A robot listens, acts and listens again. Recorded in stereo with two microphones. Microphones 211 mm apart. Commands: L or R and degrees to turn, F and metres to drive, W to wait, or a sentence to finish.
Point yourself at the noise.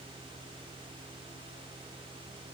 W
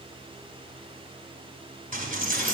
R40
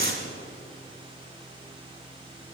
R95
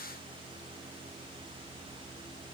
Facing where the dropped coin came from. I can't hear it now.